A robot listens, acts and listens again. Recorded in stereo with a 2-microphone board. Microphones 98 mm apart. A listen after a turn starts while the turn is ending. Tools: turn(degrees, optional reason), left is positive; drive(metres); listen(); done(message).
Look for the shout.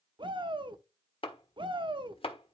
turn(degrees=-55, reason="The shout: about 55° right or 125° right.")
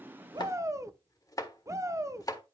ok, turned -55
turn(degrees=-40, reason="So it is at 40° right.")
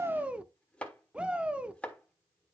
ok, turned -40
turn(degrees=-15, reason="The shout is now 15° right.")
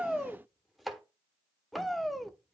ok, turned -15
done("Found it: a shout, straight ahead, under 1 m away.")